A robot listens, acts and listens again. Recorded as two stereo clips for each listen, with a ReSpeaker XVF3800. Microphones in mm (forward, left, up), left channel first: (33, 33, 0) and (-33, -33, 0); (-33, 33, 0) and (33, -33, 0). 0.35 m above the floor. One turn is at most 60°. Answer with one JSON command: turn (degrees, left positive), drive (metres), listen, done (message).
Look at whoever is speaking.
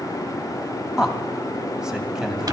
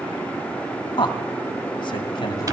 {"turn": 60}
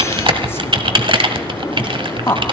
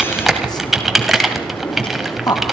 {"turn": 60}
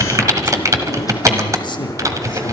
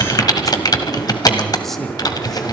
{"turn": 50}
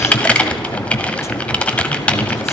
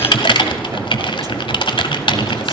{"listen": true}
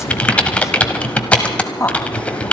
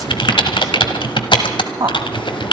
{"done": "Found it: a man speaking, straight ahead."}